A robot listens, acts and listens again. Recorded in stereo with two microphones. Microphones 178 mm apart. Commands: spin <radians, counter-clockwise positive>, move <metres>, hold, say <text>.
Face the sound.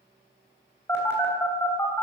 spin 0.52
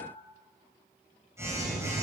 spin -0.26
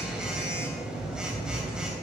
say Found it: a phone buzzing, straight ahead, 2 to 4 m away.